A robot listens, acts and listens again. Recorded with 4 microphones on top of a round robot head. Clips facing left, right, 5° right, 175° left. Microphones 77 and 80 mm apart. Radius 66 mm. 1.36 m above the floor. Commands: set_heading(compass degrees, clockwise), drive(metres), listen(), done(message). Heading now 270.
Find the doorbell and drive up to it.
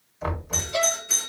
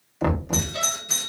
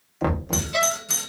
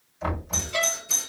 set_heading(280)
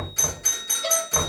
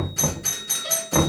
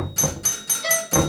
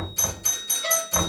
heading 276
drive(1.0)
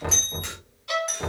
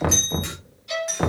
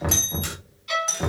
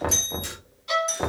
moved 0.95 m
drive(1.0)
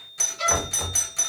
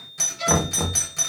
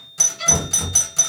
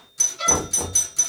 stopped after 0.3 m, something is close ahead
set_heading(286)
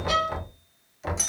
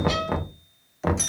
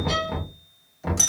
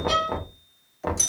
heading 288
done("Arrived at the doorbell, straight ahead.")